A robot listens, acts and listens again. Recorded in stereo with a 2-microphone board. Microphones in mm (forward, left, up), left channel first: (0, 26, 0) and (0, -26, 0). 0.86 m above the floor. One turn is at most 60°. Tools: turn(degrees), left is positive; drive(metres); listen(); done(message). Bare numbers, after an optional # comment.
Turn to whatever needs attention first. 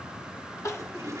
# The crying: about 70° left or 110° left.
turn(60)
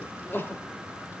# So it is at 45° left.
turn(45)
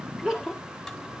# The crying is now 10° right.
turn(-10)
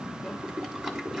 listen()
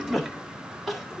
done("Facing the crying, 1 to 2 m away.")